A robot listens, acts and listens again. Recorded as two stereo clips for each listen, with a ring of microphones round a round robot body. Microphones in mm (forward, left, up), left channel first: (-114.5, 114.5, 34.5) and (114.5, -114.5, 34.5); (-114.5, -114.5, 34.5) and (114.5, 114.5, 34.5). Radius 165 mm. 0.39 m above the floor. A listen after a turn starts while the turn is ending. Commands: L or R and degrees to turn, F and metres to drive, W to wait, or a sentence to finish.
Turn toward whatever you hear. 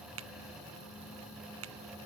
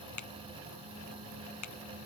R95
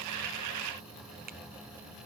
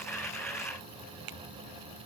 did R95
L20
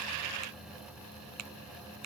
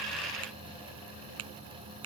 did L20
Found it: a finger snap, straight ahead.